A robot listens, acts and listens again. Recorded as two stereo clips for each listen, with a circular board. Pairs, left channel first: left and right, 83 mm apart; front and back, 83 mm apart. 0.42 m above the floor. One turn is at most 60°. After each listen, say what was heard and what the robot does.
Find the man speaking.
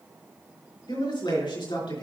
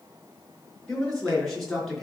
The man speaking: 90° left. Turn 60° left.
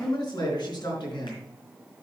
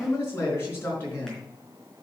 The man speaking is now 60° left. Turn 60° left.
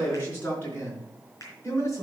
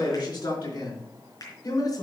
The man speaking is now 35° left. Turn 35° left.
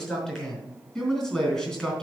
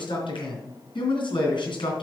Facing the man speaking.